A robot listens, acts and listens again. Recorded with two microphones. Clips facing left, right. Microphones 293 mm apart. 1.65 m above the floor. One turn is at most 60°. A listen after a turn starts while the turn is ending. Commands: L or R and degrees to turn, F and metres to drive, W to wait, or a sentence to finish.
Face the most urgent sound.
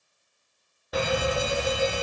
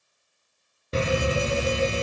R30
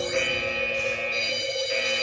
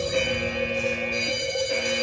R60
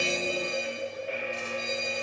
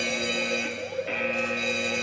R60
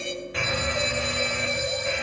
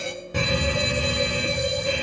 R40
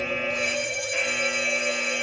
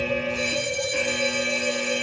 R45
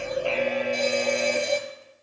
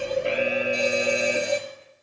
R10
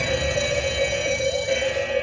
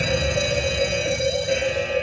Facing the alarm, under 1 m away.